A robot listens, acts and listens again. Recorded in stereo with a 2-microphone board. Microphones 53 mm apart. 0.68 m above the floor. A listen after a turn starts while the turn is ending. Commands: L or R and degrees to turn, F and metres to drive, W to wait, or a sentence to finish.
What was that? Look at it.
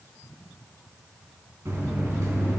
R75
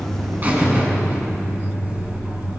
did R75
R35
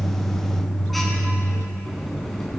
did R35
Found it: a buzzer, straight ahead.